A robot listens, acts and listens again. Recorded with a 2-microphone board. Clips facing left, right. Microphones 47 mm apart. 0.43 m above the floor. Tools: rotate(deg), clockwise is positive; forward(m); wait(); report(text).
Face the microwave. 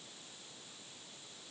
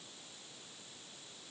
wait()
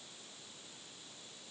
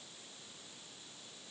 wait()
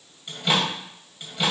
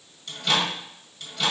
rotate(-20)
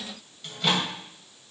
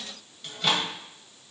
report("Facing the microwave.")